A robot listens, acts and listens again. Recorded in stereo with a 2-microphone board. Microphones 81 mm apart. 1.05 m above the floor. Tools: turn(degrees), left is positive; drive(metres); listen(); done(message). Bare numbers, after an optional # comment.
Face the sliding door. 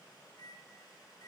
listen()
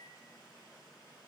listen()
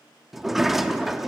turn(-30)
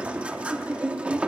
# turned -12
# So it is at 165° right.
turn(-165)
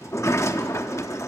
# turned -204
# The sliding door is now 40° left.
turn(40)
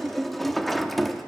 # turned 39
done("Found it: a sliding door, straight ahead, under 1 m away.")